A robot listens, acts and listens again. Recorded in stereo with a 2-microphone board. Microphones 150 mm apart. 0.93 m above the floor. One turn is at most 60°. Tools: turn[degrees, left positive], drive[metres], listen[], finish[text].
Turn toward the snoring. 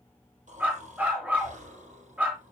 Thought: The snoring: about 55° right or 125° right.
Action: turn[-55]
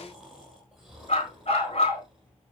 Action: finish[Facing the snoring.]